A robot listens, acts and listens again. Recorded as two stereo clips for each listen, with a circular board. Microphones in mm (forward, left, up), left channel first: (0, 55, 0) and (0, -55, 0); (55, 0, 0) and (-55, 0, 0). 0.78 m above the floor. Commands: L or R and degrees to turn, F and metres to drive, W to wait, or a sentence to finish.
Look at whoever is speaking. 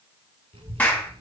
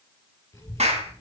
R65
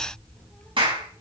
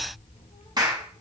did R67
Found it: a child speaking, straight ahead.